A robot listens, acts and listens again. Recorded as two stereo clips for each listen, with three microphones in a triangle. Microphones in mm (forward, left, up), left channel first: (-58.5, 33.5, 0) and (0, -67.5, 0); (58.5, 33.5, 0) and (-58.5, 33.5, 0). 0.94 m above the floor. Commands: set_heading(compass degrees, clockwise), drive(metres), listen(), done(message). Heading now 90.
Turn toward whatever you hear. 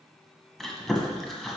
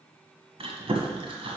set_heading(245)
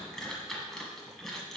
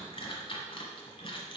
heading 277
set_heading(242)
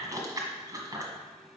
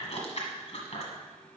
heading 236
done("Found it: chewing, straight ahead.")